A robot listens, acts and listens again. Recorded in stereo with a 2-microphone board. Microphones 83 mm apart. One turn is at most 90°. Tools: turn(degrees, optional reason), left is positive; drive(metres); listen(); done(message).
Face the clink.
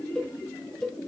listen()
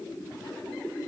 listen()
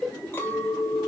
turn(degrees=30, reason="The clink: about 30° left or 150° left.")
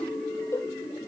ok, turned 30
done("Found it: a clink, straight ahead, 2 to 4 m away.")